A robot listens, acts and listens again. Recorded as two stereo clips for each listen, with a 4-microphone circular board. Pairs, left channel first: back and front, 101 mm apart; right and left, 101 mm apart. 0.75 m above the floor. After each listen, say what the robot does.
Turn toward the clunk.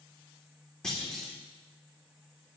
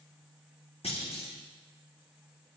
Turn 95° right.
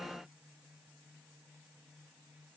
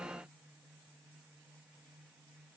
Facing where the clunk came from. I can't hear it now.